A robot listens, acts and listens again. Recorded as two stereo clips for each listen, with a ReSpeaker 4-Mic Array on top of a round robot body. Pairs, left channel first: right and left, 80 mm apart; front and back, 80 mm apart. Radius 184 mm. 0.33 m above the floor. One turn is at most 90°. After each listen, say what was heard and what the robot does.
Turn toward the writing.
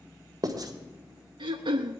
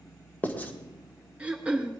The writing: 65° left. Turn 65° left.
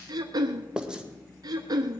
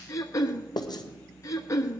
The writing is now 10° left. Turn 10° left.
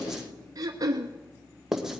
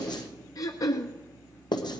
Facing the writing, 1 to 2 m away.